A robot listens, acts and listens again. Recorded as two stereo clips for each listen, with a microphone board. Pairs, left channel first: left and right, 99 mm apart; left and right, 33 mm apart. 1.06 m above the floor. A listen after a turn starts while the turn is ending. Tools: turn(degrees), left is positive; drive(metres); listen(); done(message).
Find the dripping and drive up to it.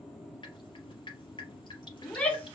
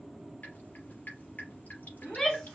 turn(degrees=50)
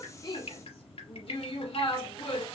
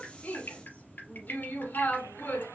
turn(degrees=80)
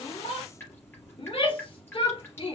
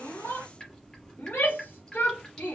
turn(degrees=20)
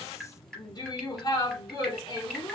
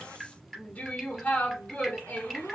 drive(metres=1.0)
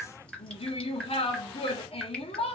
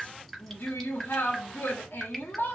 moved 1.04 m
turn(degrees=10)
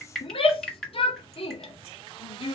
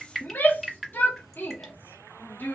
drive(metres=1.0)
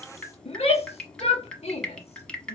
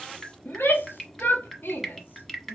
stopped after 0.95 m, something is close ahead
turn(degrees=10)
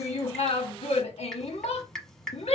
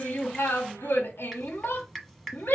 done("I am next to the dripping.")